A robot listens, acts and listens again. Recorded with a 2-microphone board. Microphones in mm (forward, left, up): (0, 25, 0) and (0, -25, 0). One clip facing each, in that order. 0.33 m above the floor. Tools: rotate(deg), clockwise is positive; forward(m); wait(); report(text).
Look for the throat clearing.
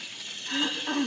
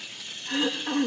rotate(25)
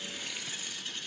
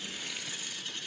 wait()
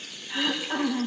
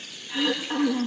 report("Facing the throat clearing, over 4 m away.")